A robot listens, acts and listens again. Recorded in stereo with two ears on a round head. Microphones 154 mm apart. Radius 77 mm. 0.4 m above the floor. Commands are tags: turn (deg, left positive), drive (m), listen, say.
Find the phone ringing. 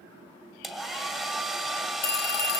<turn deg="60"/>
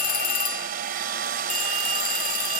<turn deg="50"/>
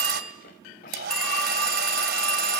<say>Found it: a phone ringing, straight ahead, 1 to 2 m away.</say>